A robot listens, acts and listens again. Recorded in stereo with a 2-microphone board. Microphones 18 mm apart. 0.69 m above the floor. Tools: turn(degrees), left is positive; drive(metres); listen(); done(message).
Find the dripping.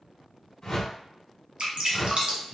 turn(degrees=-60)
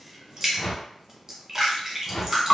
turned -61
turn(degrees=-25)
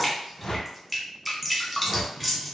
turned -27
done("Facing the dripping, 1 to 2 m away.")